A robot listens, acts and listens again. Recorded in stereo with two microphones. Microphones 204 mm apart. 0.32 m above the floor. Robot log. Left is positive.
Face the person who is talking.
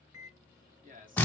note: The man speaking: about 40° right or 140° right.
cmd yaw -40
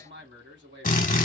note: So it is at 90° right.
cmd yaw -90
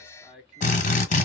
end: Facing the man speaking.